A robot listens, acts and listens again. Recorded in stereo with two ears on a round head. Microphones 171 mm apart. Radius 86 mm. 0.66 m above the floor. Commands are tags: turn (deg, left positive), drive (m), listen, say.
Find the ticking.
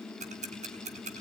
<turn deg="-35"/>
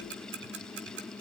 <turn deg="-105"/>
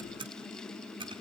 <turn deg="-25"/>
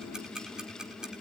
<say>Facing the ticking.</say>